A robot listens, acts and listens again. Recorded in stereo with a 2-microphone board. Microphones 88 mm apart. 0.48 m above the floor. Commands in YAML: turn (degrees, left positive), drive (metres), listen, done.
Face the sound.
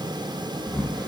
turn: 30
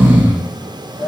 turn: -25
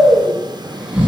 turn: -10
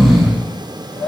done: "Facing the snoring, under 1 m away."